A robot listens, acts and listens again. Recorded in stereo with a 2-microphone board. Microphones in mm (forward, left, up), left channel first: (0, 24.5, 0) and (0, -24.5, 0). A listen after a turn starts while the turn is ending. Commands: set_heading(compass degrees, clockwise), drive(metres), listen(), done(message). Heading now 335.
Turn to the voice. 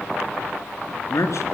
set_heading(265)
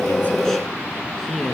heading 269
done("Facing the man speaking.")